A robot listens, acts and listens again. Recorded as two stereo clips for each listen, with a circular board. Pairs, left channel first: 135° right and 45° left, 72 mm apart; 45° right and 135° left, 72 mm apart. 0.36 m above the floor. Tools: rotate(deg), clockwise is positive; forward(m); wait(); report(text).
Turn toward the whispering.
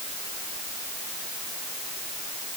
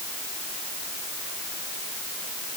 wait()
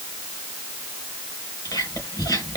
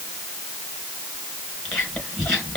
rotate(125)
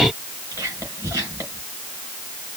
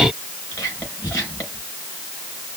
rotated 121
report("Found it: whispering, straight ahead.")